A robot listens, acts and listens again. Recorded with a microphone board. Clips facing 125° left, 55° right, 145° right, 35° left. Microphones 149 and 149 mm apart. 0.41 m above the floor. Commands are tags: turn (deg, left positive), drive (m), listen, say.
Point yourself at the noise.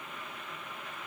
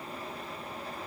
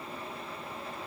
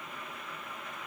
<listen/>
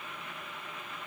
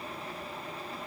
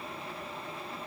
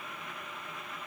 <listen/>
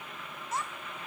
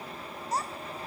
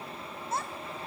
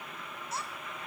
<turn deg="-110"/>
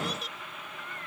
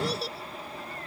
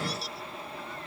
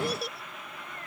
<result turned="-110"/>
<say>Found it: a child speaking, straight ahead.</say>